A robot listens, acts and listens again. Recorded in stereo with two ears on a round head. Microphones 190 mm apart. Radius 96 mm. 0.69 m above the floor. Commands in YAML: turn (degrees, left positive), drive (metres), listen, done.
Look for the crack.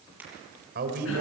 turn: -30
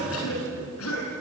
listen: true
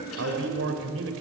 done: "I heard a crack, but can't make it out now. It was about 20° left or 140° right."